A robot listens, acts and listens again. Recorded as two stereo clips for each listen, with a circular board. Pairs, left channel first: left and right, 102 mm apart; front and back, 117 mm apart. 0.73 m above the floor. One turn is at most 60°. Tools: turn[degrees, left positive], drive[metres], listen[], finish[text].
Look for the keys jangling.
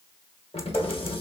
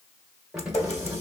Thought: The keys jangling: 100° left.
Action: turn[60]
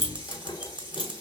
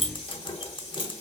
Thought: The keys jangling is now 50° left.
Action: turn[50]
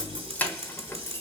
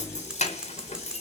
Thought: The keys jangling is now 30° left.
Action: turn[30]
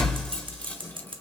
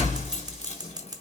Thought: The keys jangling is now 15° left.
Action: turn[15]
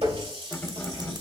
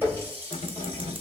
Thought: The keys jangling is now 25° left.
Action: turn[25]
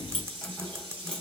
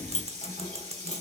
Thought: The keys jangling is now 10° left.
Action: turn[10]
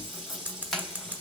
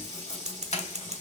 Action: finish[Found it: keys jangling, straight ahead.]